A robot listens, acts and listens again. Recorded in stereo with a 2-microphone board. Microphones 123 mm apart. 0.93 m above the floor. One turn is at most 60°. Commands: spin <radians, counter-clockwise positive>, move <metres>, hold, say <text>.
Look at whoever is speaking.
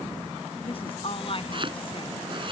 spin 0.79
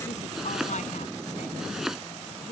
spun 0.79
spin 1.05
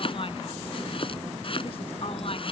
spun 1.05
spin 0.87
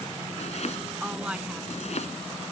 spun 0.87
spin -0.17
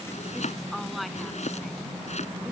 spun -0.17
say Facing the woman speaking.